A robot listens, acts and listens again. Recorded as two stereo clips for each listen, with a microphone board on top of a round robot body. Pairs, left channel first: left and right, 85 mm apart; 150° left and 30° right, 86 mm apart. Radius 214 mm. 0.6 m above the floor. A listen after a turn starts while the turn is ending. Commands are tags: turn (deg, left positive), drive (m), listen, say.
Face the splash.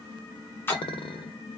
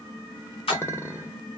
<turn deg="155"/>
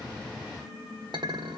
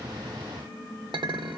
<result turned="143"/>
<turn deg="15"/>
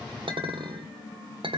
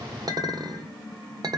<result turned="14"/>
<say>Facing where the splash came from. I can't hear it now.</say>